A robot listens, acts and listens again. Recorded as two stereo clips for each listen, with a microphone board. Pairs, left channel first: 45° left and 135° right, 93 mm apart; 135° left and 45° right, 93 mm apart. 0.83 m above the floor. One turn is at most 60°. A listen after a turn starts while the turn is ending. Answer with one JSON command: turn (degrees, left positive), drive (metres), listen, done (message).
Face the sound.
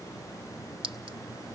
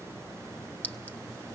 {"turn": -60}
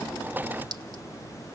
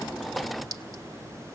{"turn": -60}
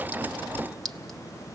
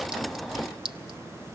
{"turn": -40}
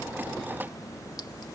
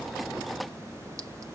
{"listen": true}
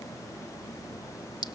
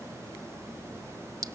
{"done": "Found it: a clink, straight ahead, 1 to 2 m away."}